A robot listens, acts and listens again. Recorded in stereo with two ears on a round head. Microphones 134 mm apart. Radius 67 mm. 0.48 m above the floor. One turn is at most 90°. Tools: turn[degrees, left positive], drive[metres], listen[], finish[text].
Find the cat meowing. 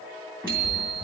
Action: turn[-30]
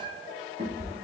Thought: So it is at 140° right.
Action: turn[-90]
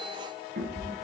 Thought: The cat meowing is now 60° right.
Action: turn[-60]
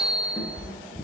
Thought: The cat meowing is now 25° left.
Action: turn[25]
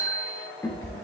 Thought: The cat meowing is now 20° left.
Action: turn[20]
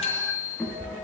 Action: finish[Found it: a cat meowing, straight ahead, 2 to 4 m away.]